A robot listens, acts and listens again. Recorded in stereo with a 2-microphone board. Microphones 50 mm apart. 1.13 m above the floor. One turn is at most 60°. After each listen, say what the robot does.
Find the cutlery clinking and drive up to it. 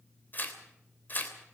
Keep listening.
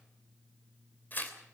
Keep listening.
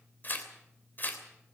I can't make out cutlery clinking to turn to.